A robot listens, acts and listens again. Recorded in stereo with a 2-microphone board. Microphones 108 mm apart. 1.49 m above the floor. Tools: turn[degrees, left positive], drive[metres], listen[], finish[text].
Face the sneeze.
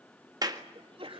Thought: The sneeze: about 55° right or 125° right.
Action: turn[-55]
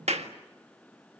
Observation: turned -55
Action: listen[]
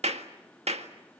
Action: finish[I heard a sneeze, but can't make it out now. It was about straight ahead or 70° right.]